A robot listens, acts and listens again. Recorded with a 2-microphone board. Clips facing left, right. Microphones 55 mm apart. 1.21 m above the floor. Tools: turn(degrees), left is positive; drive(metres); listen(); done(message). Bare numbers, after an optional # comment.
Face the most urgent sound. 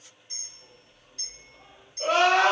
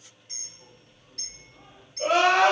# The crying: about 20° right or 160° right.
turn(-20)
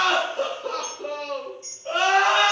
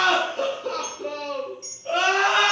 done("Facing the crying, 1 to 2 m away.")